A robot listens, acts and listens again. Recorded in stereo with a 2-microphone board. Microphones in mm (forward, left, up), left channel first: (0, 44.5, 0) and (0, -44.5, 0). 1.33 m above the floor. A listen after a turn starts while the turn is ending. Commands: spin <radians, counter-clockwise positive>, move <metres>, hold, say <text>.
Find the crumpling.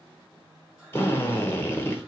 hold
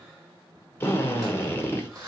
spin -0.70
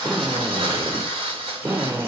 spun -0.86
spin -1.57
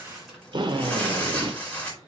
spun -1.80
spin 0.26
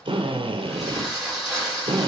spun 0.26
say Found it: crumpling, straight ahead, 2 to 4 m away.